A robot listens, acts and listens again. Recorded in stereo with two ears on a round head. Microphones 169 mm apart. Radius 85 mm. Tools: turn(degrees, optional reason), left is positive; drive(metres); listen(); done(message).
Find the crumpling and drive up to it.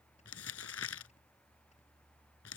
turn(degrees=90)
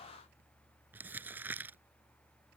turn(degrees=-10, reason="So it is at 10° right.")
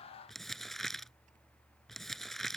drive(metres=1.0)
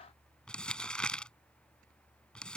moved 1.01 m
drive(metres=1.0)
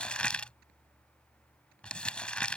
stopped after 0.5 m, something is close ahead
done("Arrived at the crumpling, straight ahead.")